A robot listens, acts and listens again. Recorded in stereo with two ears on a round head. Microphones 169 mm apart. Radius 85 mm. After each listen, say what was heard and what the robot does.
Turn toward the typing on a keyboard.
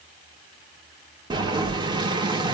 Keep listening.
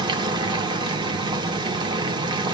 Keep listening.
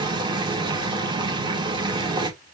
I can't make out typing on a keyboard, only boiling.